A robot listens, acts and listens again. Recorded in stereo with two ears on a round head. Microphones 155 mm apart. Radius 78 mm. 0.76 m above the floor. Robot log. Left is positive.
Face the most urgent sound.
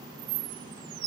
cmd idle
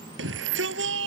cmd yaw -90
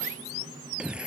end: Facing the shout.